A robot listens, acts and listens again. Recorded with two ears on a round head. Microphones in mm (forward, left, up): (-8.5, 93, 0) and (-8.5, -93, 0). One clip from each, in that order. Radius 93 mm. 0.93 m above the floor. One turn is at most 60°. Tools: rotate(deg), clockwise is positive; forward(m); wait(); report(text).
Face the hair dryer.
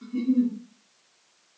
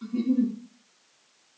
wait()
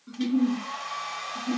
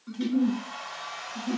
rotate(-20)
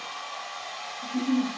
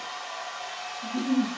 report("Found it: a hair dryer, straight ahead.")